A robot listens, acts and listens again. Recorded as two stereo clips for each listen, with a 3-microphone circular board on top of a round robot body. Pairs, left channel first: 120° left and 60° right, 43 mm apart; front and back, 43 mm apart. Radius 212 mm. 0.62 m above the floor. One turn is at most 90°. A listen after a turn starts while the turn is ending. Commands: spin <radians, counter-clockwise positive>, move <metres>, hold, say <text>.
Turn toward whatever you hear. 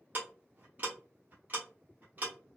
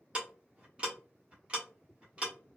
spin -1.57
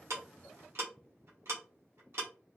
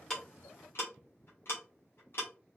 spin -0.52
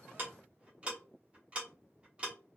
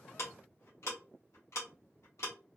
say Found it: ticking, straight ahead.